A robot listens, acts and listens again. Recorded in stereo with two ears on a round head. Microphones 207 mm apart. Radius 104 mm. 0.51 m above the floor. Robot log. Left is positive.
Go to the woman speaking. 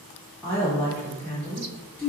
cmd yaw +30
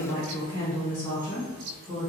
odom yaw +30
note: So it is at 140° left.
cmd yaw +140
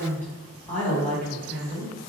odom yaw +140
note: The woman speaking is now 10° left.
cmd yaw +10
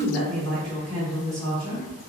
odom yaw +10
cmd fwd 1.0
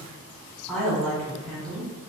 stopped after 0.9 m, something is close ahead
end: I am next to the woman speaking.